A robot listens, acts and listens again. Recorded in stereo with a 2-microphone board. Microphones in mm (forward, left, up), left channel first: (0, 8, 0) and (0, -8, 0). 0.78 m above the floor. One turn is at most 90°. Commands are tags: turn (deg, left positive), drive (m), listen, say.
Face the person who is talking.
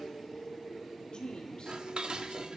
<turn deg="60"/>
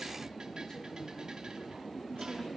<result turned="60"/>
<listen/>
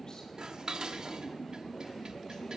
<listen/>
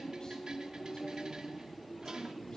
<say>I heard a woman speaking, but can't make it out now. It was about straight ahead or 60° left.</say>